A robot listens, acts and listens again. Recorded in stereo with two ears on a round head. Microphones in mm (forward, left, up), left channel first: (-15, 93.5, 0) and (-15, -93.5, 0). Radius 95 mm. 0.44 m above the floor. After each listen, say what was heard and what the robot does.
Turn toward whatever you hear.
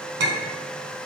The clink: about 65° right or 115° right. Turn 65° right.
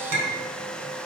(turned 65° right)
So it is at 50° right. Turn 50° right.
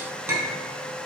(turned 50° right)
The clink is now 10° right. Turn 10° right.
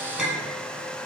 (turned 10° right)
Found it: a clink, straight ahead, 2 to 4 m away.